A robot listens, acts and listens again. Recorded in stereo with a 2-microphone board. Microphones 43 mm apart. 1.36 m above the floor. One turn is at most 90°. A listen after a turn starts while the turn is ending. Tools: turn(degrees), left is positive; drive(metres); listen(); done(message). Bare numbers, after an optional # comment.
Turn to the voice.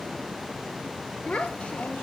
# The child speaking: about 30° left or 150° left.
turn(30)
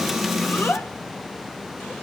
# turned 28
# So it is at 120° left.
turn(90)
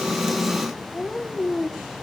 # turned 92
# The child speaking is now 30° left.
turn(30)
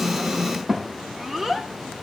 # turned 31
done("Found it: a child speaking, straight ahead.")